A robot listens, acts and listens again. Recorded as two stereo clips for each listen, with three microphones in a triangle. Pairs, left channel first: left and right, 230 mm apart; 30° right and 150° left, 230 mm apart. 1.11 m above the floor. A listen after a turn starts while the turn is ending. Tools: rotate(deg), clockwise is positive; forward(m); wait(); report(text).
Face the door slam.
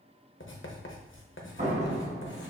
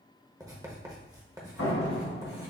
rotate(30)
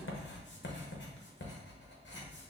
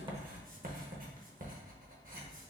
report("Facing where the door slam came from. I can't hear it now.")